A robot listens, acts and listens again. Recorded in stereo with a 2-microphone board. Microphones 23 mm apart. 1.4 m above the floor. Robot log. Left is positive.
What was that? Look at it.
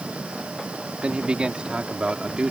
note: The man speaking: about 45° right or 135° right.
cmd yaw -45
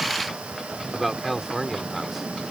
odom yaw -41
end: Found it: a man speaking, straight ahead.